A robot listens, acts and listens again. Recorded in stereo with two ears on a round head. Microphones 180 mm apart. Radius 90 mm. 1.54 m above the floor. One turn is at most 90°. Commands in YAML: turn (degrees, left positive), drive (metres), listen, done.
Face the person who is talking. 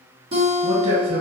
turn: -70
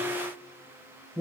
done: "Found it: a man speaking, straight ahead."